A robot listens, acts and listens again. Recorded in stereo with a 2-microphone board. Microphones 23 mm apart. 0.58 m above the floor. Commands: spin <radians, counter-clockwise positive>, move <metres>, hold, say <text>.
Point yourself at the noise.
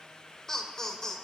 spin 0.52
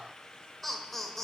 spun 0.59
spin 0.26
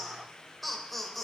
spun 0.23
spin 0.17
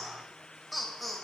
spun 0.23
say Facing the laughter, 2 to 4 m away.